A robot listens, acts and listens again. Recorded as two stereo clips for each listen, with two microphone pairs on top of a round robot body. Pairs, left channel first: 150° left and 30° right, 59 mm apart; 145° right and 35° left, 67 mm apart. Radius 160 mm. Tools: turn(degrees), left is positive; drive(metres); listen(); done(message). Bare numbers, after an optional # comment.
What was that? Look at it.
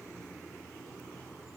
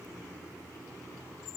listen()
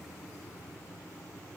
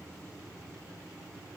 listen()
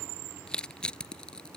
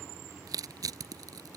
# The crushing: 70° left.
turn(70)
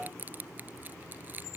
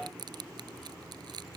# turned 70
# The crushing is now 30° left.
turn(30)
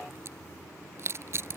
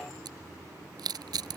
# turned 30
# The crushing is now 15° left.
turn(15)
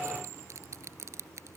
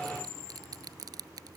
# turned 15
# The crushing is now 10° left.
turn(10)
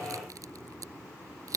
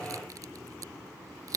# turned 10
done("Facing the crushing.")